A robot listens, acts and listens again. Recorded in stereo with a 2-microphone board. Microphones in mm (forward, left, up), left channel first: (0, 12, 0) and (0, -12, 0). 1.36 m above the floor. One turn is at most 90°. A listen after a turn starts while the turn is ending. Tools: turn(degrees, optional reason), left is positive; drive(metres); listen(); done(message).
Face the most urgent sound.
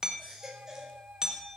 turn(degrees=-20, reason="The baby crying: about 20° right or 160° right.")
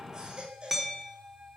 turn(degrees=-90, reason="So it is at 140° right.")
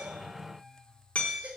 turn(degrees=-70, reason="The baby crying is now 70° right.")
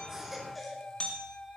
listen()
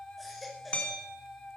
done("Found it: a baby crying, straight ahead.")